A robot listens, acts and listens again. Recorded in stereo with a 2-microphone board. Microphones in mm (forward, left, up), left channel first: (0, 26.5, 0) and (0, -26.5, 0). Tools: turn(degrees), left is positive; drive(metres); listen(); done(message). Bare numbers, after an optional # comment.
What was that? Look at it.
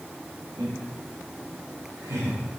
turn(-90)
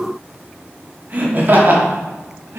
# So it is at 55° right.
turn(-55)
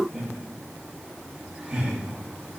# The laughter is now 20° right.
turn(-20)
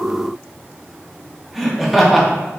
done("Found it: laughter, straight ahead, 1 to 2 m away.")